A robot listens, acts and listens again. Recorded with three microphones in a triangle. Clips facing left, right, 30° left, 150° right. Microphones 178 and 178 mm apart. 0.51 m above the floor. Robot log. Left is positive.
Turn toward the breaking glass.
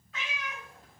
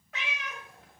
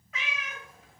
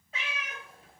cmd idle
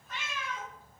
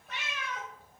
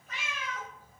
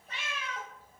cmd idle
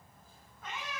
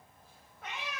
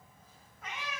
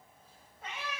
end: I can't make out breaking glass, only a cat meowing.